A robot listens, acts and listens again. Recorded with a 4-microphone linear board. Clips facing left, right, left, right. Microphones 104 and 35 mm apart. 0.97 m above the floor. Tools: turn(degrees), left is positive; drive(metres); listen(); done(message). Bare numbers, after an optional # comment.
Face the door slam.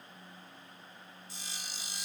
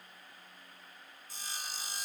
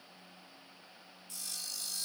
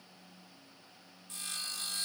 listen()
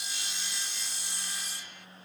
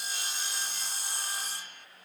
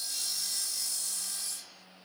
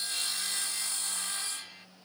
listen()
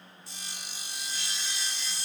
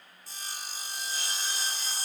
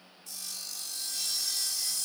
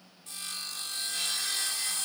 done("I can't make out a door slam, only sawing.")